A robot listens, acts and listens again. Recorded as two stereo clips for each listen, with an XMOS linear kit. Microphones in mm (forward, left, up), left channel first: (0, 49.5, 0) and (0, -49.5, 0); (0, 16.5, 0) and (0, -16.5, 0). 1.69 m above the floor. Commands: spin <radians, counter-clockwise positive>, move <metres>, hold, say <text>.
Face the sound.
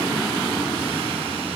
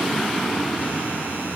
hold
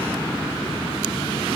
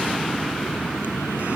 hold
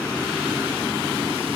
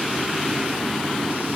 say I can't make out anything to turn to.